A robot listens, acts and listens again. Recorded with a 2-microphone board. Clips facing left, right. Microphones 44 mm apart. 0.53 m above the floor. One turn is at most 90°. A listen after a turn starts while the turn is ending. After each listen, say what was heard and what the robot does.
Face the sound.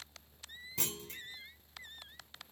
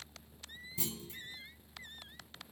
The clunk: about 65° left or 115° left. Turn 65° left.
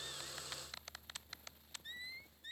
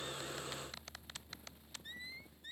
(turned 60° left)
Keep listening.
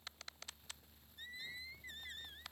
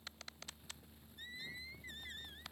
I heard a clunk, but can't make it out now. It was about 5° left or 55° left.